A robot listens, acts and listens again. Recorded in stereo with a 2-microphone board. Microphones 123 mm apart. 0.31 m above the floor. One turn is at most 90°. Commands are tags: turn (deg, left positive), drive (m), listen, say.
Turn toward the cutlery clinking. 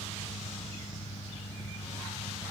<listen/>
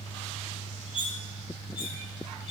<turn deg="45"/>
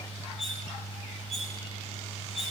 <say>Facing the cutlery clinking, over 4 m away.</say>